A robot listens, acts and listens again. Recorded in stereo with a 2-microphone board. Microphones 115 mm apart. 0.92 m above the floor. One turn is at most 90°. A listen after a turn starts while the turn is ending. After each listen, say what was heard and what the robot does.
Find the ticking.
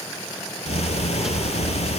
The ticking: about 65° left or 115° left. Turn 65° left.
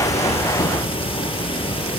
So it is at 50° left. Turn 50° left.
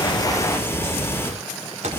The ticking is now 20° left. Turn 20° left.
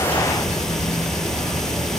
Facing the ticking.